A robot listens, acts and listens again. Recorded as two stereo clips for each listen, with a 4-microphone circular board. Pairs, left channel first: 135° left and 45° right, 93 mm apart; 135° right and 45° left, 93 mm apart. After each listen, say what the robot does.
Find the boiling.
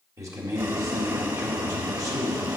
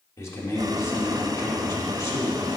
Found it: boiling, straight ahead, under 1 m away.